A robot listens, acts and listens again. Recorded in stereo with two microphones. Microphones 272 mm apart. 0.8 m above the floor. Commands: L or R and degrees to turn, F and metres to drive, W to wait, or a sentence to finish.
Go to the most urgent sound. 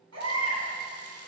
R70
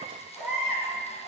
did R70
F1.0
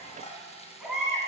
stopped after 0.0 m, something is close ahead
Blocked. The baby crying is further on, straight ahead.